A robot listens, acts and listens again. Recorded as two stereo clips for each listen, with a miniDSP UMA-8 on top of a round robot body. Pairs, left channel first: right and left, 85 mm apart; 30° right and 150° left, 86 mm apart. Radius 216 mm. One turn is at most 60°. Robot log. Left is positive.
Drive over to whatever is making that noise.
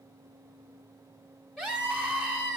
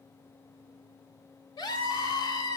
cmd fwd 1.0
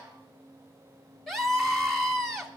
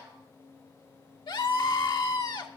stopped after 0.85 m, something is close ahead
end: Arrived at the scream, straight ahead.